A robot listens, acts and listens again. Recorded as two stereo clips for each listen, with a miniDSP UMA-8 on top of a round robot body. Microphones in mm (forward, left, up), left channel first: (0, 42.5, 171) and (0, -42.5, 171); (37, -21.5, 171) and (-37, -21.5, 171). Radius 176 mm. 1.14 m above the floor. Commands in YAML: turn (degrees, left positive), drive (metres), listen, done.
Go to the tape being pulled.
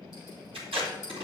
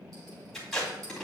turn: -85
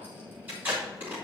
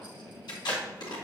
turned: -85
turn: -20
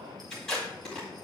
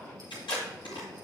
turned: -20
drive: 1.0
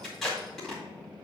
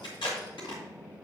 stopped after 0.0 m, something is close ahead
done: "Something is in my way. I am facing the tape being pulled but have not reached it."